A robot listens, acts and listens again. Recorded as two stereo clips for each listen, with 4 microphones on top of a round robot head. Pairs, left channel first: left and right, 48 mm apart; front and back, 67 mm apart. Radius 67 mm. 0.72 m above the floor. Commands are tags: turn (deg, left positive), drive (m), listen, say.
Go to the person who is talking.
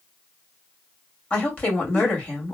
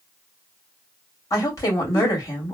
<turn deg="35"/>
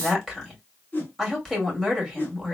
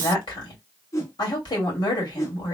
<drive m="1.0"/>
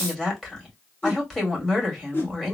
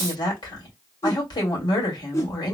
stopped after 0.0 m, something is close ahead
<turn deg="10"/>
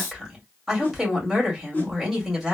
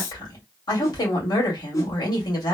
<say>Blocked. The woman speaking is further on, straight ahead.</say>